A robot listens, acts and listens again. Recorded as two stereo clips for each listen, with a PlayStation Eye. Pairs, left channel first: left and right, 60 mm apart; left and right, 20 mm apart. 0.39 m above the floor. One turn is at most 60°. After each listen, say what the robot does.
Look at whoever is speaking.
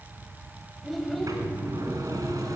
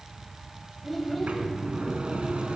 Turn 30° left.
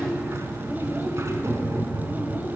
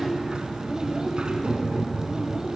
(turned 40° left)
Keep listening.
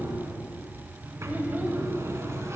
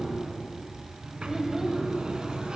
Turn 35° right.
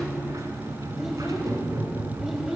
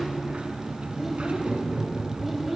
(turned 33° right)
Found it: a child speaking, straight ahead, 1 to 2 m away.